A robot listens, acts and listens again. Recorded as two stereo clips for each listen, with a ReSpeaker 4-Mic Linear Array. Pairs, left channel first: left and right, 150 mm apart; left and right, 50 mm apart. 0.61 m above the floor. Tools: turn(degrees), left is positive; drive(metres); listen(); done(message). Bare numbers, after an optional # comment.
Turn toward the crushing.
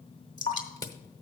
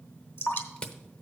# The crushing: about 25° left or 155° left.
turn(25)
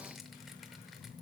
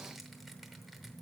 listen()
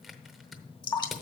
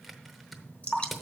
done("Found it: crushing, straight ahead, under 1 m away.")